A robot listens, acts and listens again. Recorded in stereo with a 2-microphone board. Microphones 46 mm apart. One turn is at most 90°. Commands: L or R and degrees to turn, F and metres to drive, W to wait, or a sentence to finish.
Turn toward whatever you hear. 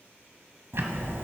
R65
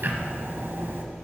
R50
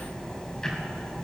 L15
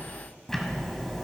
L10
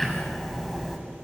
Found it: ticking, straight ahead.